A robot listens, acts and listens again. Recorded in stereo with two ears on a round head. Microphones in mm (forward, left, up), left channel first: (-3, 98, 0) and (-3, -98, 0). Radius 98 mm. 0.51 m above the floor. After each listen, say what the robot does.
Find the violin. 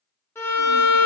Turn 30° left.
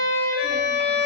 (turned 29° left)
Turn 135° left.
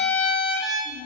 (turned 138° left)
Facing the violin, under 1 m away.